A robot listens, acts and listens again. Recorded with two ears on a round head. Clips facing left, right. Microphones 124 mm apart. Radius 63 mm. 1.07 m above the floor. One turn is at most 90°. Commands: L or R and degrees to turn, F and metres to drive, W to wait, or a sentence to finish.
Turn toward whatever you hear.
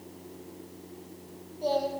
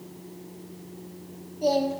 R20
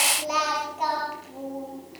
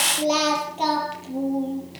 R35
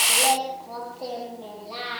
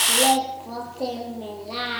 R90
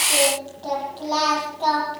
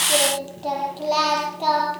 R15
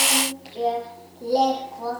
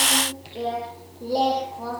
Found it: singing, straight ahead, over 4 m away.